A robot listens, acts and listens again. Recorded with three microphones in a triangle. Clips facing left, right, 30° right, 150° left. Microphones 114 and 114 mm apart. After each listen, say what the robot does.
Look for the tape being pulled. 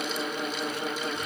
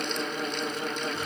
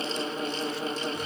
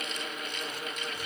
Keep listening.
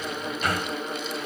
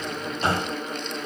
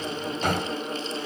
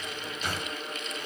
Keep listening.
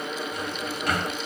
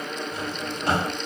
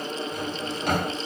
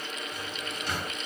I can't make out tape being pulled, only a drawer.